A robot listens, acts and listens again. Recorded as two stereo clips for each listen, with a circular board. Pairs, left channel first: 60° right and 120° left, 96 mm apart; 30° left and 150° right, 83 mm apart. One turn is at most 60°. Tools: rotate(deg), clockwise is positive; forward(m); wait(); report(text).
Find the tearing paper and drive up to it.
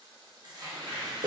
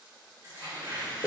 rotate(-60)
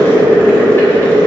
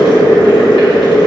rotate(-60)
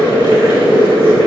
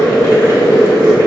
rotate(-40)
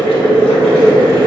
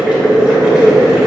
report("Facing where the tearing paper came from. I can't hear it now. I did not reach it.")